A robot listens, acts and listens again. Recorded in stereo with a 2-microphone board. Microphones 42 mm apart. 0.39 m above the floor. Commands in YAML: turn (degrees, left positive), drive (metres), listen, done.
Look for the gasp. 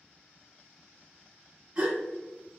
turn: -25
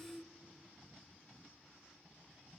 listen: true
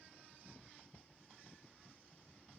done: "I heard a gasp, but can't make it out now. It was about straight ahead or 130° right."